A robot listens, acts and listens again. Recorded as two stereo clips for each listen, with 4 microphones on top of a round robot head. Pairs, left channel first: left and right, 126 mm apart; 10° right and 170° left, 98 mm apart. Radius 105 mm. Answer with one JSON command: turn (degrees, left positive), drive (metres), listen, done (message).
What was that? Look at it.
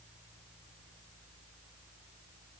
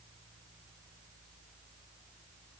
{"listen": true}
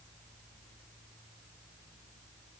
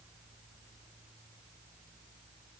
{"listen": true}
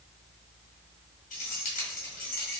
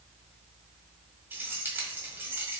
{"turn": 100}
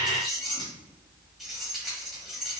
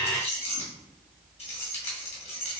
{"done": "Facing the keys jangling, 1 to 2 m away."}